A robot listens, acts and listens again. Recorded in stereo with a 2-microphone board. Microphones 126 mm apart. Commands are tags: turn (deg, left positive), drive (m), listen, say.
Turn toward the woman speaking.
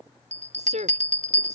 <turn deg="-70"/>
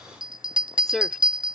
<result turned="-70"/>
<say>Found it: a woman speaking, straight ahead.</say>